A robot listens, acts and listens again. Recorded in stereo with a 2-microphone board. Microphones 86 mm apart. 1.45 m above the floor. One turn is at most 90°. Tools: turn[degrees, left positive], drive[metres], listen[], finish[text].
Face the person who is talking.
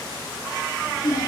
Thought: The child speaking: about 45° left or 135° left.
Action: turn[45]
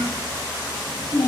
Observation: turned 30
Thought: So it is at 115° left.
Action: turn[90]
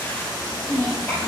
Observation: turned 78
Thought: The child speaking is now 40° left.
Action: turn[40]
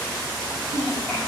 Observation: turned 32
Thought: The child speaking is now 10° left.
Action: turn[10]
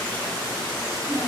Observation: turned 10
Action: finish[Found it: a child speaking, straight ahead.]